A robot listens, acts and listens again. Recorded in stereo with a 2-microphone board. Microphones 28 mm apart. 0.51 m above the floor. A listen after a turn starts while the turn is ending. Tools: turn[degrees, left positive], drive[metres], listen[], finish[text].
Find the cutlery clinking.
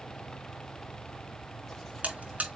Action: listen[]
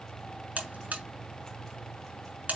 Action: listen[]
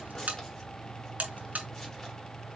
Action: finish[I can't make out cutlery clinking, only a buzzer.]